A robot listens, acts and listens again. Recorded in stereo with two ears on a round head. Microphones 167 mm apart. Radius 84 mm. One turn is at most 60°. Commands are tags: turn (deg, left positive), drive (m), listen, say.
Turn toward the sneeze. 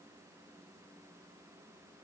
<listen/>
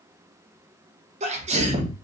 <turn deg="-35"/>
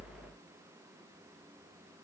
<listen/>
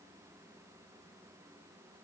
<say>I heard a sneeze, but can't make it out now. It was about straight ahead or 110° right.</say>